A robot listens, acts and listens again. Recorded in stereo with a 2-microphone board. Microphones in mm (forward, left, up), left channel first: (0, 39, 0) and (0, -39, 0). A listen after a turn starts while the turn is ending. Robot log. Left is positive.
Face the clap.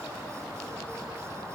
cmd idle
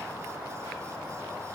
cmd idle
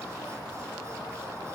end: I can't make out a clap.